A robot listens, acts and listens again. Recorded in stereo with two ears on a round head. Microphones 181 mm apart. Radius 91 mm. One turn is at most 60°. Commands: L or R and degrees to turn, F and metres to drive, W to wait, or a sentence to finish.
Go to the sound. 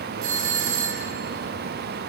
R60
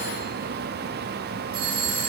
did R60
R45
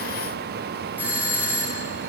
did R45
R10
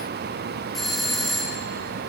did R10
F1.0
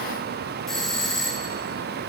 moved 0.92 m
F1.0
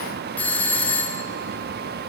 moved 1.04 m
L10
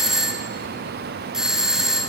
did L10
F1.0
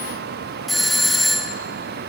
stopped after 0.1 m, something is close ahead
I am next to the doorbell.